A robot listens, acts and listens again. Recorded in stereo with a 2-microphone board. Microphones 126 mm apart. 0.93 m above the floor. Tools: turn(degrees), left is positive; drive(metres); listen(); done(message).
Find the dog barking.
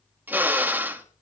listen()
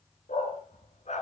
turn(degrees=65)
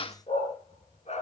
turn(degrees=60)
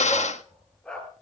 done("Facing the dog barking, over 4 m away.")